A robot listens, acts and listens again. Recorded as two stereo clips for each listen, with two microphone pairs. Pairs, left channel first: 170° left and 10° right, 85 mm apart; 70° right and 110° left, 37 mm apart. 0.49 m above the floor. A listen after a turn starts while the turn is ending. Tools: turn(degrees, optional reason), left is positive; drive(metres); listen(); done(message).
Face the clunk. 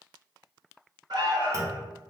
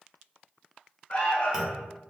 turn(degrees=45, reason="The clunk: 45° left.")
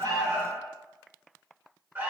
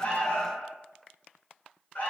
done("Facing where the clunk came from. I can't hear it now.")